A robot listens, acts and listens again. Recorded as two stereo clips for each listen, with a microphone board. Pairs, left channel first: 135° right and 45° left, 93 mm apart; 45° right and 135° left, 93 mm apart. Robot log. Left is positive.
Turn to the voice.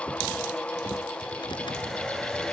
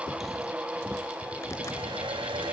cmd idle
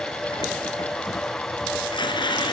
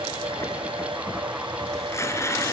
cmd idle
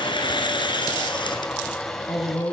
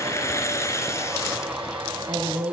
note: The woman speaking: 175° left.
cmd yaw +175
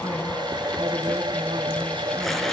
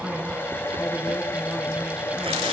cmd idle
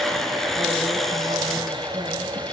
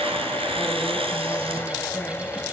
cmd idle
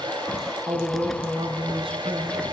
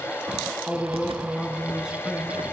note: The woman speaking is now 55° left.
cmd yaw +55
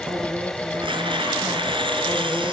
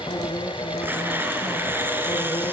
cmd idle
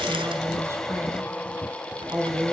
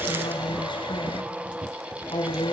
note: The woman speaking is now 15° right.
cmd yaw -15
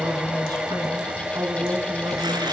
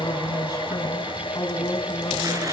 end: Facing the woman speaking, 2 to 4 m away.